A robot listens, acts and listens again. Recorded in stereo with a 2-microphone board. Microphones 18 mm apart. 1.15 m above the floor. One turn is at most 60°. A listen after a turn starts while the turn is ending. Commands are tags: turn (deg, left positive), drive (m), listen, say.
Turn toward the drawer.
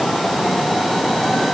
<listen/>
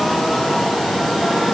<listen/>
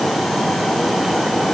<say>I can't make out a drawer to turn to.</say>